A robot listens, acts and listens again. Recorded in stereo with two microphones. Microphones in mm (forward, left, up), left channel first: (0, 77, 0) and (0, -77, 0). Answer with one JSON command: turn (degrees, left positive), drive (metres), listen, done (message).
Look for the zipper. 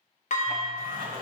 {"turn": -65}
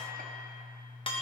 {"listen": true}
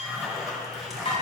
{"done": "Facing the zipper, 1 to 2 m away."}